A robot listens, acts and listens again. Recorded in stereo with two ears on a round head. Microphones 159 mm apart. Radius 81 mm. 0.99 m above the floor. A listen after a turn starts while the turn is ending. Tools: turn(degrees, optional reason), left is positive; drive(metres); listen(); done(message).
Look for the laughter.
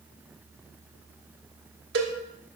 listen()
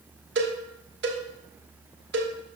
listen()
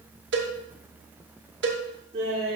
turn(degrees=-35, reason="The laughter: about 35° right or 145° right.")
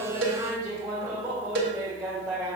done("Found it: laughter, straight ahead, 2 to 4 m away.")